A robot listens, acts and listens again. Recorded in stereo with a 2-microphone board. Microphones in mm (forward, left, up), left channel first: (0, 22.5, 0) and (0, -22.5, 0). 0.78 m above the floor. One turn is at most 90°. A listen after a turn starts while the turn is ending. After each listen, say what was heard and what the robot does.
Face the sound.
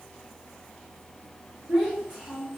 Turn 30° right.
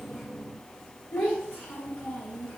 So it is at 40° left. Turn 40° left.
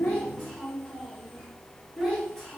Found it: a child speaking, straight ahead.